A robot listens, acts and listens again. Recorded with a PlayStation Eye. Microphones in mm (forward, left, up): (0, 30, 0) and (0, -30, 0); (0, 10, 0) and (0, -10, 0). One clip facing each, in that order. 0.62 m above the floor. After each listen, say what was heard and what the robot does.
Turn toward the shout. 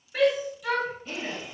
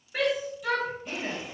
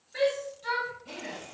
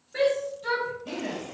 Turn 30° right.
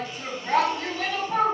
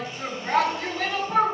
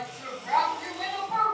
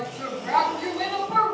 So it is at 145° right. Turn 145° right.
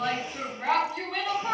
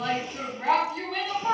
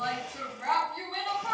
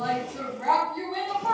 The shout is now 10° left. Turn 10° left.
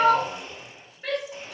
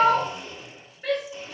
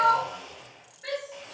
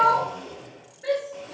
Found it: a shout, straight ahead, 1 to 2 m away.